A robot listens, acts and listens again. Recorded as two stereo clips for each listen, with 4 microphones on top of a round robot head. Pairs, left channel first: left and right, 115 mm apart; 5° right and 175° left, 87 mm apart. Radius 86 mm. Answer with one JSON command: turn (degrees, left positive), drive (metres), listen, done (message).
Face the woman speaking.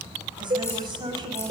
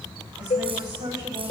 {"turn": -140}
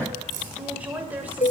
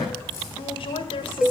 {"turn": -15}
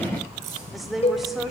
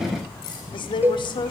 {"done": "Facing the woman speaking, 1 to 2 m away."}